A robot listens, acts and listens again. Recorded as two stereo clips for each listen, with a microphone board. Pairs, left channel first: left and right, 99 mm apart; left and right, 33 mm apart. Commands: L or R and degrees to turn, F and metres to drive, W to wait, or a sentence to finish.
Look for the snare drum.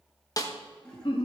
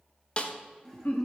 L35
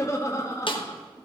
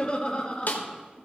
L105
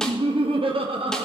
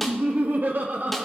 W
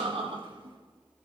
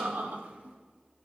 W
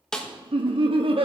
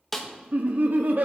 Found it: a snare drum, straight ahead, 1 to 2 m away.